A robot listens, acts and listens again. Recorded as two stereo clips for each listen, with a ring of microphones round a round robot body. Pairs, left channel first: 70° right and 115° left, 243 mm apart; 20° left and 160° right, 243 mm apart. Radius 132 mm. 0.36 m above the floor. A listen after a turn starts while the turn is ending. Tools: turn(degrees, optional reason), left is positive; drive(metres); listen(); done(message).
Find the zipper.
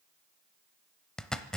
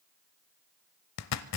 turn(degrees=20, reason="The zipper: 20° left.")
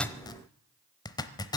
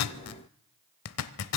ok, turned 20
done("Facing the zipper.")